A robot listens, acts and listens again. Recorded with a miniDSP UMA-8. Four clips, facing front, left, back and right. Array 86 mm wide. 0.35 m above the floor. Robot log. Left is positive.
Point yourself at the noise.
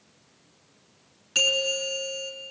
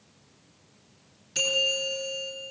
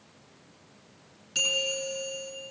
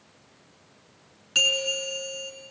note: The bell: 60° right.
cmd yaw -60
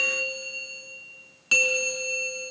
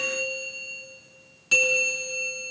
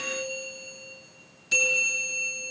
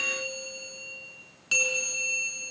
end: Facing the bell.